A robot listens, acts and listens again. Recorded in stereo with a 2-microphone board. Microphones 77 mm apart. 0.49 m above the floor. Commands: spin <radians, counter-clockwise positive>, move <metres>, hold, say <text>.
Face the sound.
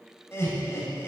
spin 0.52
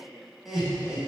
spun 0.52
say Facing the laughter.